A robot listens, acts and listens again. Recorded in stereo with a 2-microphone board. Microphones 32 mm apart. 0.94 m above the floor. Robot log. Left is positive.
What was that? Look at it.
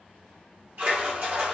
note: The splash: about 60° right or 120° right.
cmd yaw -60
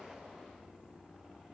cmd idle
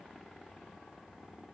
end: I heard a splash, but can't make it out now. It was about straight ahead or 60° right.